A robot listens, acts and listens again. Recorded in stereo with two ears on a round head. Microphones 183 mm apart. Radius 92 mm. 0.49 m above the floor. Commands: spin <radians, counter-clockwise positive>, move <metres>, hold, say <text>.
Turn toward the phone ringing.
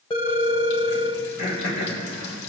spin 0.44
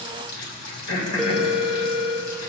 say Found it: a phone ringing, straight ahead.